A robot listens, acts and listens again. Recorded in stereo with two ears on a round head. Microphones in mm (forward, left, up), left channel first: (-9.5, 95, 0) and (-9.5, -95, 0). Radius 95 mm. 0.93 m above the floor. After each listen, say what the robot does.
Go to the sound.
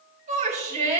Turn 35° right.
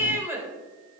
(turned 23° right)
Turn 10° right.
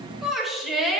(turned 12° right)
Drive 1.0 m forward.
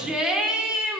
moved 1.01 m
Drive 1.0 m forward.
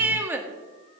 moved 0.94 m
Turn 10° right.
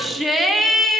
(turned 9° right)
Drive 1.0 m forward.
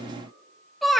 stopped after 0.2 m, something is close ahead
Arrived at the shout, straight ahead.